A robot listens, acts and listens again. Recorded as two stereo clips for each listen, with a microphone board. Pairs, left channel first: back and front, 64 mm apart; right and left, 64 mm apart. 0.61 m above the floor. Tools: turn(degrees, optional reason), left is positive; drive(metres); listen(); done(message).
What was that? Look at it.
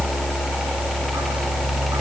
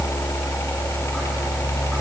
listen()
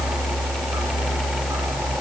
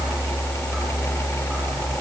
listen()
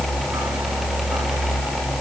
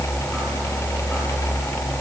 done("I can't make out anything.")